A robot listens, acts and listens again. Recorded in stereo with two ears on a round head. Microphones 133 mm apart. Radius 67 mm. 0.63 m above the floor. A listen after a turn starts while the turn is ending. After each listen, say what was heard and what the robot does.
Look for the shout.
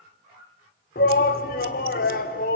The shout: about 60° left or 120° left. Turn 60° left.
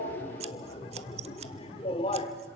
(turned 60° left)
So it is at 40° left. Turn 40° left.
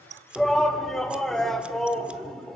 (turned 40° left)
Facing the shout.